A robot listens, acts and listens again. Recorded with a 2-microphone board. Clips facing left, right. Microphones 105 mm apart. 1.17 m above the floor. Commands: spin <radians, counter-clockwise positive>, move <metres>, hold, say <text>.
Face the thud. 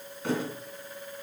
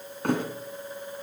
spin -1.05
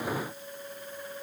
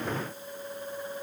hold
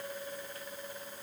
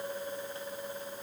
say I heard a thud, but can't make it out now. It was about straight ahead or 60° right.